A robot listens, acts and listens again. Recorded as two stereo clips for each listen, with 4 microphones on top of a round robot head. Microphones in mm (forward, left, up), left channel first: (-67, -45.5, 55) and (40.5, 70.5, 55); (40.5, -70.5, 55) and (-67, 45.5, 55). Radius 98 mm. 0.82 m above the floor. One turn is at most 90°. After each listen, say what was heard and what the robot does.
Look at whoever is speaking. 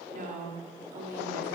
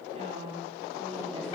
The woman speaking: 80° left. Turn 80° left.
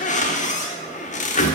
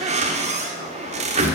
Keep listening.
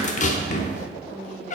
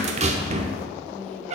Keep listening.
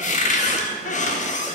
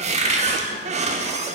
Facing where the woman speaking came from. I can't hear it now.